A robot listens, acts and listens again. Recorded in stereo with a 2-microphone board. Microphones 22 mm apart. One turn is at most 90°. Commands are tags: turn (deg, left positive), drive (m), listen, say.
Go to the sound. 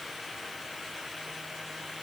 <listen/>
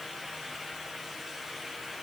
<listen/>
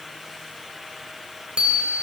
<turn deg="-50"/>
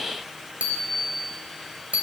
<turn deg="-80"/>
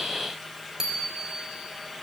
<turn deg="-25"/>
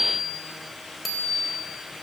<drive m="1.0"/>
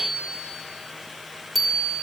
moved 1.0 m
<drive m="1.0"/>
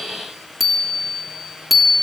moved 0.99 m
<drive m="1.0"/>
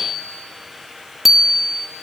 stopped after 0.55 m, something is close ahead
<say>Arrived at the bicycle bell, straight ahead.</say>